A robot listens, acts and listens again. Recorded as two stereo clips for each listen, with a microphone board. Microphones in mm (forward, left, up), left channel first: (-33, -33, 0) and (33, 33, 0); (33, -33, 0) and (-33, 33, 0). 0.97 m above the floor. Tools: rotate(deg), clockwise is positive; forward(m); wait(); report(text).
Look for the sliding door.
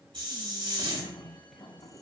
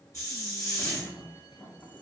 rotate(105)
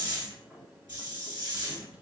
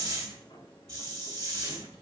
rotate(30)
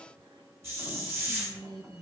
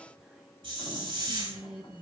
wait()
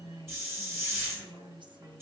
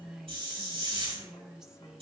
wait()
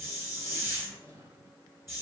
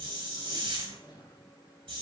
rotate(10)
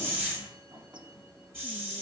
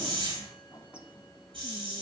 report("Facing the sliding door.")